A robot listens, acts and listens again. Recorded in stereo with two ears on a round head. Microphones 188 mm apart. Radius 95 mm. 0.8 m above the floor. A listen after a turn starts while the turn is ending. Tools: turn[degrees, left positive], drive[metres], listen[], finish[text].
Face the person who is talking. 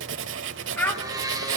Action: turn[30]
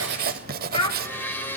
Thought: So it is at 155° left.
Action: turn[155]
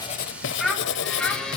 Action: finish[Found it: a child speaking, straight ahead.]